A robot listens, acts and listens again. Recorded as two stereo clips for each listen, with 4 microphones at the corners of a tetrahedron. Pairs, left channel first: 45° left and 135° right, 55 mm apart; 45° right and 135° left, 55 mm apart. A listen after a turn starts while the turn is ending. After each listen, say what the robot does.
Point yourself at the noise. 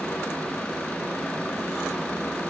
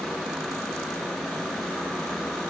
Keep listening.
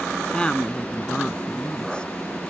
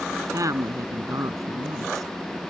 Turn 120° left.
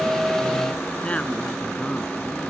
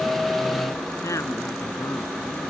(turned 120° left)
Turn 20° right.
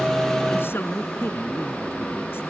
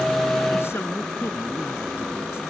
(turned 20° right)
Facing the woman speaking.